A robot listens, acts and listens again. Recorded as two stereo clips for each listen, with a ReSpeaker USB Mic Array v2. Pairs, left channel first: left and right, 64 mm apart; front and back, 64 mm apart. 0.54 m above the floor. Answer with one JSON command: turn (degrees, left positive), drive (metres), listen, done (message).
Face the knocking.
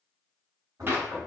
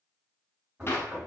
{"turn": -110}
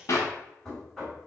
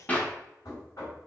{"done": "Facing the knocking."}